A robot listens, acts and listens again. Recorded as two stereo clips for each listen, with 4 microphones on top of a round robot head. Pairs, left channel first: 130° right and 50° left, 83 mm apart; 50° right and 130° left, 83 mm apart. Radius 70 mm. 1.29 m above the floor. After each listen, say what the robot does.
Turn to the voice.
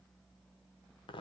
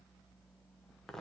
Keep listening.
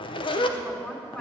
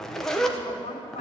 Turn 55° right.
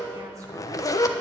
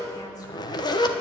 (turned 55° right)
Keep listening.
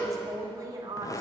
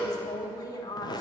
Facing the woman speaking, 2 to 4 m away.